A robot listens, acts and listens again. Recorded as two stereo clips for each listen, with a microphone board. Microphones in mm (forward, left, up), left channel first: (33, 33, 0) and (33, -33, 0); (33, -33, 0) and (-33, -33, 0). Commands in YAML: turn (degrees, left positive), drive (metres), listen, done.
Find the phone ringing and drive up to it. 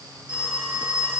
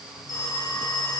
turn: -20
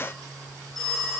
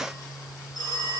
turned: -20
drive: 1.0
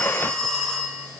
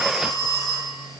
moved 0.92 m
turn: 10
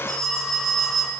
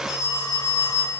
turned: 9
drive: 1.0
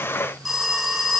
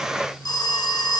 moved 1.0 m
drive: 1.0
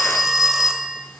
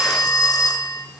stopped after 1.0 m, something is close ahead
done: "Arrived at the phone ringing, straight ahead."